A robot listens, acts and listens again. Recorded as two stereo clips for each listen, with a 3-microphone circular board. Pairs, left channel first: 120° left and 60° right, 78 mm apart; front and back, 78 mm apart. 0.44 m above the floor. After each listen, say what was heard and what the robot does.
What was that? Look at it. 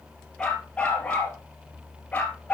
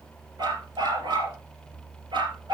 The dog barking: 170° right. Turn 170° right.
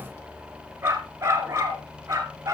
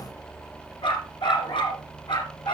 Found it: a dog barking, straight ahead, 2 to 4 m away.